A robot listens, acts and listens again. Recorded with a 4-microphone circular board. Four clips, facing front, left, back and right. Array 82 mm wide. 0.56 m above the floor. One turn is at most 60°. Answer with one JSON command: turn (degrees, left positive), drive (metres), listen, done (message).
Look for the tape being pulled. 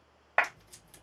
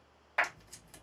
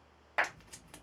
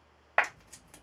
{"turn": -60}
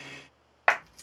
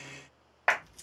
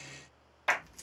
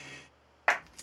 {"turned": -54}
{"turn": -60}
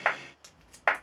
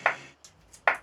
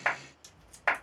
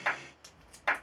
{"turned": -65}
{"turn": -35}
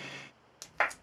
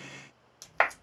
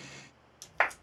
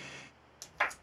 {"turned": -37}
{"done": "Facing the tape being pulled."}